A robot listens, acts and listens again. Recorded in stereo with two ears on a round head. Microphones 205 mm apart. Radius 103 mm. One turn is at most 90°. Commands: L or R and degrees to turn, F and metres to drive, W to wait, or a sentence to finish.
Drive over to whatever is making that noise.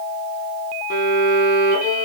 L40
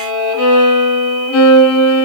L90
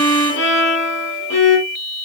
L55
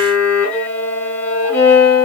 F1.0
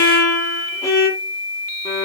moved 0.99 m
L15
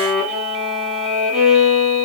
F1.0
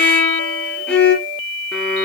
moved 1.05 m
F1.0
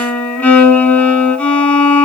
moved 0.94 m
F1.0
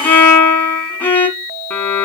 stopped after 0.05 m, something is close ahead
L10
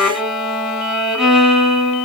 I am next to the violin.